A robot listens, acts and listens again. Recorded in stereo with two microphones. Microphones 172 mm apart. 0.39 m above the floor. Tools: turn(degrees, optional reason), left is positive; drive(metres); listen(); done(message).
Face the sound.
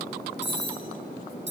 turn(degrees=90)
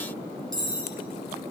done("Found it: cutlery clinking, straight ahead.")